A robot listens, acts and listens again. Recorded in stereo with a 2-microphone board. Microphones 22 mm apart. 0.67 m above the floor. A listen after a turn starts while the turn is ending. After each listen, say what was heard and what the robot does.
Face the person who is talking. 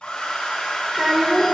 Turn 30° right.
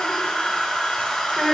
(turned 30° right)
So it is at 15° left. Turn 15° left.
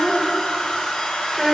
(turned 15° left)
Facing the child speaking, 1 to 2 m away.